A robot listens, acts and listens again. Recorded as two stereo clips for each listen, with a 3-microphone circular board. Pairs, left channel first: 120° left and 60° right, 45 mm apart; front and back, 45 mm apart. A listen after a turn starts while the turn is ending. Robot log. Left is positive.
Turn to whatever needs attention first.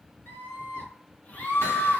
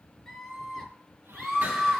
note: The scream: 95° left.
cmd yaw +95
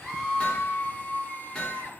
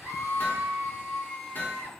end: Facing the scream, over 4 m away.